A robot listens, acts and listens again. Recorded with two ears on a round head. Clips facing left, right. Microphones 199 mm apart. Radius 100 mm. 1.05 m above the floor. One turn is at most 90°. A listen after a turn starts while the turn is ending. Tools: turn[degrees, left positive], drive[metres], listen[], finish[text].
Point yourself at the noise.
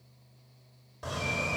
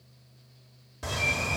Thought: The bird: about 30° right or 150° right.
Action: turn[-30]
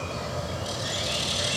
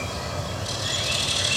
Action: finish[Found it: a bird, straight ahead, over 4 m away.]